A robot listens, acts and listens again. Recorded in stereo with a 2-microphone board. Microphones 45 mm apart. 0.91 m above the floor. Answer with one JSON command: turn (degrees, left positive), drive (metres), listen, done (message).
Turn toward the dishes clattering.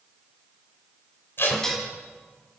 {"turn": 30}
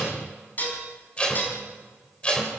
{"turn": 140}
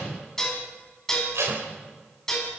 {"turn": 10}
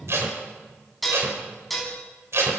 {"done": "Found it: dishes clattering, straight ahead."}